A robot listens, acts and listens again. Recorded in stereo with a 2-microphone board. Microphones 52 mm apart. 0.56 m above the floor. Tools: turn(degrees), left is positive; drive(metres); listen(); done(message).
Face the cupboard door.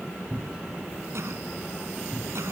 turn(degrees=-35)
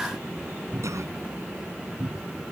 turn(degrees=-110)
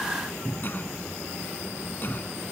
turn(degrees=10)
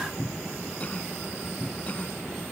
done("Found it: a cupboard door, straight ahead.")